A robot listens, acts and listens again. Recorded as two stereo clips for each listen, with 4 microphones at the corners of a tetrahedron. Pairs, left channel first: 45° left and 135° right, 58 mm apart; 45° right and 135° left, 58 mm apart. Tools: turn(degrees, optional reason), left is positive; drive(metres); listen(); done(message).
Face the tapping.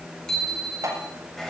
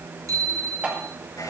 turn(degrees=-155, reason="The tapping: 155° right.")
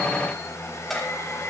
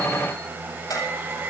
turn(degrees=-40, reason="The tapping is now 40° right.")
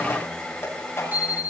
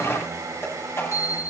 done("Found it: tapping, straight ahead.")